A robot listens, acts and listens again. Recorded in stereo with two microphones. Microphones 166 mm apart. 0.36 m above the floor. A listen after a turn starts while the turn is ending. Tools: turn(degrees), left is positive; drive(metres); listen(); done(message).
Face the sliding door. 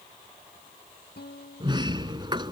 turn(degrees=-30)
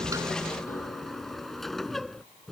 done("Found it: a sliding door, straight ahead.")